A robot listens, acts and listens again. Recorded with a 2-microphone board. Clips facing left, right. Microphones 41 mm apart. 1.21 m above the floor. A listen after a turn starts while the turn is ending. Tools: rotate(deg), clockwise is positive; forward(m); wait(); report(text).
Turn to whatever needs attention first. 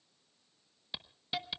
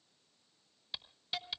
wait()
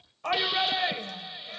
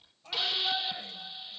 rotate(-70)
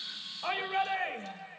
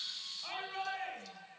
rotate(-45)
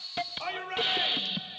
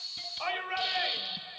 rotate(15)
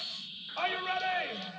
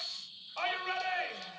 report("Facing the shout.")